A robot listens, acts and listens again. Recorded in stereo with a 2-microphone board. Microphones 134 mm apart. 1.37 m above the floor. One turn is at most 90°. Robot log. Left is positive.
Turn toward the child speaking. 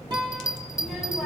cmd yaw +30
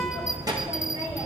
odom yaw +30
note: So it is at 30° right.
cmd yaw -30
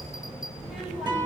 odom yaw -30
end: Found it: a child speaking, straight ahead, over 4 m away.